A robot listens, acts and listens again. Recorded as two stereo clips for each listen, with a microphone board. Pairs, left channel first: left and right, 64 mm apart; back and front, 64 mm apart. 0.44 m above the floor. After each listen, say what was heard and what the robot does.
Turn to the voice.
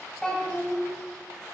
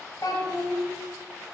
The child speaking: 165° left. Turn 165° left.
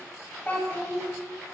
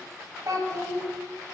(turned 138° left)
The child speaking is now 25° left. Turn 25° left.
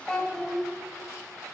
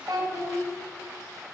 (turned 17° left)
The child speaking is now 10° left. Turn 10° left.
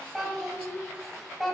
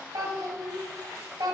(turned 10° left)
Facing the child speaking, 1 to 2 m away.